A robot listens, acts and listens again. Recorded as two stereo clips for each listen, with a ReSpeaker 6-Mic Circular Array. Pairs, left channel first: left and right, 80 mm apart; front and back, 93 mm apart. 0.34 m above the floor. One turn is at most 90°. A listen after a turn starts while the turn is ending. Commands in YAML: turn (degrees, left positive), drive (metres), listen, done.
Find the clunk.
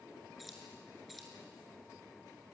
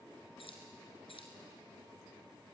listen: true
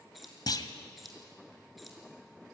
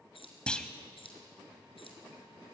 turn: 80
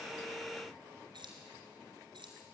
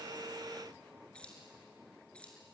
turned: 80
done: "Facing where the clunk came from. I can't hear it now."